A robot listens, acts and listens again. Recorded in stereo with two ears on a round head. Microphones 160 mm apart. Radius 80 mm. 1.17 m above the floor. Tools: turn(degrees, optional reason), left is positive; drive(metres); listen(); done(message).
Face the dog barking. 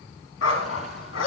turn(degrees=90)
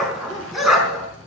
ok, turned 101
done("Found it: a dog barking, straight ahead.")